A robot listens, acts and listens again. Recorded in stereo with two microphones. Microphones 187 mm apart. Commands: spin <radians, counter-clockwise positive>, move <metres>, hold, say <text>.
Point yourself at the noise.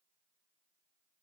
hold
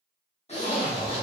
spin 0.61
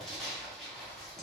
say Found it: a zipper, straight ahead.